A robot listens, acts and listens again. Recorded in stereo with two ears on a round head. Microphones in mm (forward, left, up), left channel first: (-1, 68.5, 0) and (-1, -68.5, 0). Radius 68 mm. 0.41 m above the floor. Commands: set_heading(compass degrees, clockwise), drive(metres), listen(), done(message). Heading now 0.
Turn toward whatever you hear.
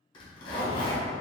set_heading(330)
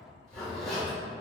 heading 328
done("Facing the zipper, 1 to 2 m away.")